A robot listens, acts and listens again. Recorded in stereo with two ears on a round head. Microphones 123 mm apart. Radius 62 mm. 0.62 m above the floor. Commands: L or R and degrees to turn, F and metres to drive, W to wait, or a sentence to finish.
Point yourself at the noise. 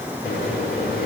L65
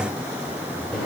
Facing the microwave.